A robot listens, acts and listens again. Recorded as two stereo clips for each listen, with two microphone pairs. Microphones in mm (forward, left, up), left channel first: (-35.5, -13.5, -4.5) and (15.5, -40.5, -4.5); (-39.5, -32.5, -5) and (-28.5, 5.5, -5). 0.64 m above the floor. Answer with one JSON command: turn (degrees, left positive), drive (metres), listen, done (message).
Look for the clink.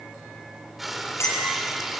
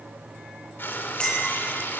{"turn": -170}
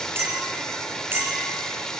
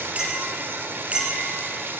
{"turn": 20}
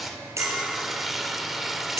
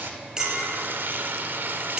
{"done": "Facing the clink."}